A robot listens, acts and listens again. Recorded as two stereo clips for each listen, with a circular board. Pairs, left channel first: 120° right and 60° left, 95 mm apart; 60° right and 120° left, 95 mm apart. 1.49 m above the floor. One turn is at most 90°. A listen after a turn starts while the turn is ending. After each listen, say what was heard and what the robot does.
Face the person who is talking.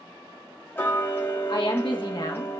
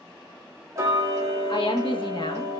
The woman speaking: 90° right. Turn 90° right.
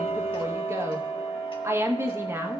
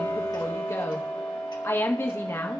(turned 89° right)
Facing the woman speaking.